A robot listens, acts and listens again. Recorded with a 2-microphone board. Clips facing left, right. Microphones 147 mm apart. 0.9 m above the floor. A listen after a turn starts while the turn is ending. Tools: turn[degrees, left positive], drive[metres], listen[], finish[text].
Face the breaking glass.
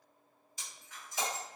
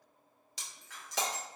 Thought: The breaking glass: about 75° right or 105° right.
Action: turn[-75]
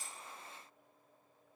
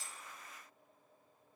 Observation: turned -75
Action: listen[]
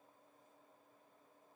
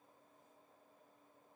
Action: finish[I heard breaking glass, but can't make it out now. It was about straight ahead or 30° right.]